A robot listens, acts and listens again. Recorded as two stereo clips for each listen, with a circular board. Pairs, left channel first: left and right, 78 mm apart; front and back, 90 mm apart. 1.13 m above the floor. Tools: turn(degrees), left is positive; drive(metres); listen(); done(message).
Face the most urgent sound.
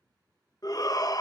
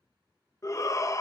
turn(degrees=50)
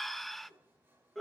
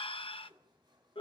done("Found it: a shout, straight ahead, under 1 m away.")